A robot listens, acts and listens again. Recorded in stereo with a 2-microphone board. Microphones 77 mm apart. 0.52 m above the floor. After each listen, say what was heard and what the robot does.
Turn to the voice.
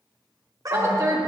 The woman speaking: about 35° right or 145° right. Turn 35° right.
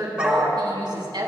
So it is at 105° right. Turn 105° right.
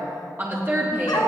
The woman speaking is now 30° right. Turn 30° right.
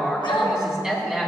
The woman speaking is now 10° right. Turn 10° right.
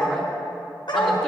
Keep listening.
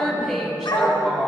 Found it: a woman speaking, straight ahead.